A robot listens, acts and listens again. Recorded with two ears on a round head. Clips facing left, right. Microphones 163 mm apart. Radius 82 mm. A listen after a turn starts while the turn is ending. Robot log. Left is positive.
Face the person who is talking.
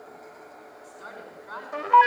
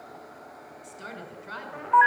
note: The woman speaking: about 30° right or 150° right.
cmd yaw -30
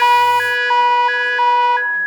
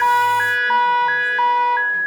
cmd idle
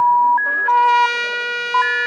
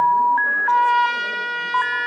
cmd idle
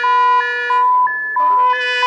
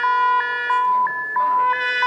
end: I heard a woman speaking, but can't make it out now. It was about straight ahead or 120° right.